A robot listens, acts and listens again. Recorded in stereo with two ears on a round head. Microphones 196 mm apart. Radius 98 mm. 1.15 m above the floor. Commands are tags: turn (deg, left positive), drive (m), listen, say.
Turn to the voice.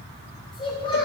<turn deg="25"/>
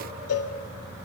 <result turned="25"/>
<listen/>
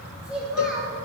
<say>Found it: a child speaking, straight ahead, 2 to 4 m away.</say>